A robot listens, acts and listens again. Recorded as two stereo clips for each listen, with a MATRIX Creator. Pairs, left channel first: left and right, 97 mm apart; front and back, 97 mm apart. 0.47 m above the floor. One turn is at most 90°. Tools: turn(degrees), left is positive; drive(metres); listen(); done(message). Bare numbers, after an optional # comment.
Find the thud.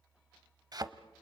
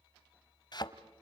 # The thud: 40° right.
turn(-40)
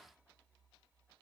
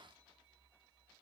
done("Facing where the thud came from. I can't hear it now.")